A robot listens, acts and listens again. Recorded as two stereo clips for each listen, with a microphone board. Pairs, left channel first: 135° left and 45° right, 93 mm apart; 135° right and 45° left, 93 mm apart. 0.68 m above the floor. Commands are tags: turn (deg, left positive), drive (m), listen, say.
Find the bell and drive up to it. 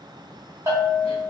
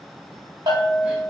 <turn deg="15"/>
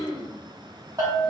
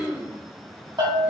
<drive m="1.0"/>
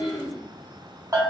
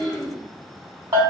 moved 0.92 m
<turn deg="10"/>
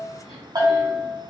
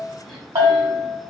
<drive m="1.0"/>
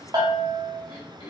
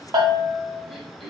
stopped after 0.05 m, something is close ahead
<say>I am next to the bell.</say>